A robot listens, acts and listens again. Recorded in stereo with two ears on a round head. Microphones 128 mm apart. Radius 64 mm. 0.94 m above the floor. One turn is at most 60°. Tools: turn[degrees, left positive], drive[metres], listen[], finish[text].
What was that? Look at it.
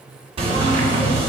Thought: The knocking: about 40° right or 140° right.
Action: turn[-40]
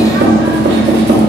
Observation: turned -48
Thought: So it is at 95° right.
Action: turn[-60]
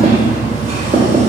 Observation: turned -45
Thought: The knocking is now 50° right.
Action: turn[-50]
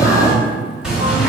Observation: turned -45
Action: finish[Facing the knocking, 1 to 2 m away.]